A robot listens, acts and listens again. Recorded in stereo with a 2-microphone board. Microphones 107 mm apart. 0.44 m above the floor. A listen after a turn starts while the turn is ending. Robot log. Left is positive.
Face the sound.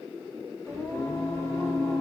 note: The singing: about 25° left or 155° left.
cmd yaw +25
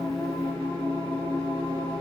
note: So it is at 125° left.
cmd yaw +125
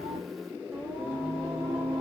note: The singing is now 20° right.
cmd yaw -20
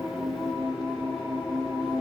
end: Found it: singing, straight ahead, 1 to 2 m away.